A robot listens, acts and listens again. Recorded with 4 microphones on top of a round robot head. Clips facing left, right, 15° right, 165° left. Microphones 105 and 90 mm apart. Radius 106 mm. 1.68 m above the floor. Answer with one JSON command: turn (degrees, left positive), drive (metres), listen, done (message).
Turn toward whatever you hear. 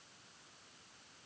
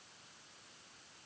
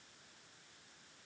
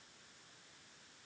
{"listen": true}
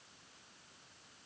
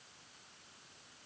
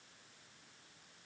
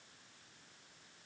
{"listen": true}
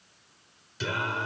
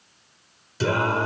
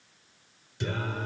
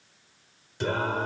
{"turn": -135}
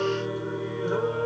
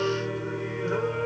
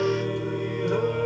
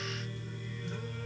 {"turn": 10}
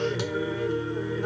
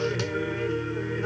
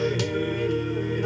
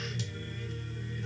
{"turn": 10}
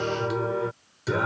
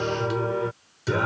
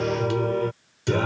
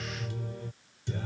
{"done": "Facing the singing."}